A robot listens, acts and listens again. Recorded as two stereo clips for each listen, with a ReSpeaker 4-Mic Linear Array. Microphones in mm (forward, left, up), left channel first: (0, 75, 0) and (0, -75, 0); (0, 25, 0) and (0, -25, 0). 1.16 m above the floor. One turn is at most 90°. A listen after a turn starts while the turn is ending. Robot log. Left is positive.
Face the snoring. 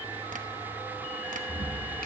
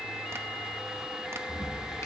note: The snoring: about 65° left or 115° left.
cmd yaw +65
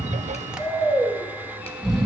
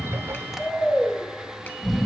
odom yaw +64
end: Facing the snoring.